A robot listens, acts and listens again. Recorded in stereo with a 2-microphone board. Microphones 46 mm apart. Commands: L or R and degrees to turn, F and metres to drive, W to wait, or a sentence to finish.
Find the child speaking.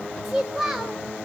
R30
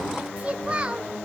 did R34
R160
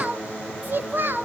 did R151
R50
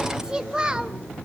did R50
R20
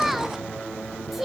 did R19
Facing the child speaking, 1 to 2 m away.